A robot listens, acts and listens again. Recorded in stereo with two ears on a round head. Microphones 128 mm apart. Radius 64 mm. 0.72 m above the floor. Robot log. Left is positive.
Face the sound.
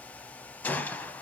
cmd yaw +30
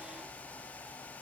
cmd idle
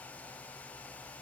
end: I heard a gunshot, but can't make it out now. It was about 20° right or 140° left.